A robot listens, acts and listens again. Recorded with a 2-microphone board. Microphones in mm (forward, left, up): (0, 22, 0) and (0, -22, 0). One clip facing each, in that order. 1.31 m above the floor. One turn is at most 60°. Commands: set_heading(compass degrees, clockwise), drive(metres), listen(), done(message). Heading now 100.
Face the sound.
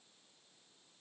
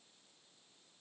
listen()
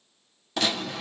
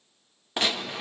set_heading(130)
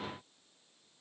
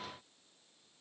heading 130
listen()
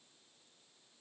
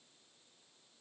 done("I heard a gunshot, but can't make it out now. It was about straight ahead or 120° right.")